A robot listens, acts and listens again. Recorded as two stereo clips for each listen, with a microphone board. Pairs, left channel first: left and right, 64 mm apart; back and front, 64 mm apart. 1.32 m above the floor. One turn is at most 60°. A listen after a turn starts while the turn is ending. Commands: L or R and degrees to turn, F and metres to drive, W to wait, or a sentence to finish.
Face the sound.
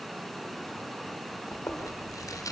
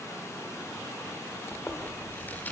L60
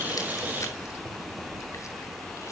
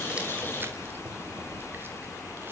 L55
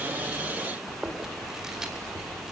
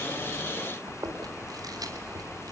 R10
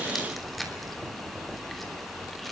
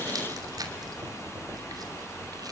Facing the chewing, 2 to 4 m away.